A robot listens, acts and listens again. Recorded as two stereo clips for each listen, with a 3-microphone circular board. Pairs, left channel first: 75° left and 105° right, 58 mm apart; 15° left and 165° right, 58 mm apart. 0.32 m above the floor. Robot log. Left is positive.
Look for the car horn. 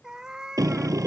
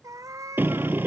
note: The car horn: 110° right.
cmd yaw -110
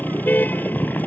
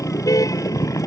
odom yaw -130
note: The car horn is now 15° left.
cmd yaw +15
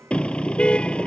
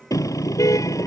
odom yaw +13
end: Found it: a car horn, straight ahead.